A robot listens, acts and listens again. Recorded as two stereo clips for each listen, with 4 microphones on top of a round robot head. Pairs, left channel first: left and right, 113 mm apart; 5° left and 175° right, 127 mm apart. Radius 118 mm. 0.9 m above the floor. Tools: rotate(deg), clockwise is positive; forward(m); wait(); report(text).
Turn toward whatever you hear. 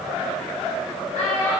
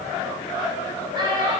rotate(-120)
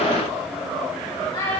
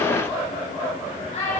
rotate(-30)
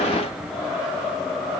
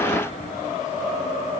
wait()
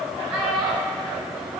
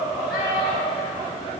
rotate(15)
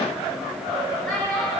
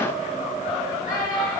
report("Facing the child speaking, over 4 m away.")